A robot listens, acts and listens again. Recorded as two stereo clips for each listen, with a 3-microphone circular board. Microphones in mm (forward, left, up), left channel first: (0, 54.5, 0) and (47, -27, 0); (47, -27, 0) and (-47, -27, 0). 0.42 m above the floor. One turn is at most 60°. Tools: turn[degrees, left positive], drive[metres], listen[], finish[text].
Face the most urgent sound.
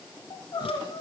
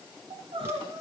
Thought: The crying: 160° left.
Action: turn[60]
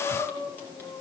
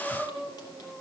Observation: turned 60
Thought: The crying is now 90° left.
Action: turn[60]
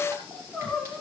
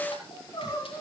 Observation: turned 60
Thought: The crying is now 40° left.
Action: turn[40]
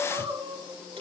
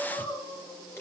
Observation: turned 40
Thought: The crying is now 25° right.
Action: turn[-25]
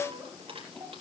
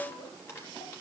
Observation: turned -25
Action: listen[]
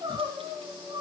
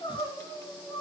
Thought: The crying is now 20° right.
Action: turn[-20]
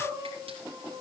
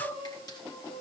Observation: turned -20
Action: finish[Found it: crying, straight ahead, 2 to 4 m away.]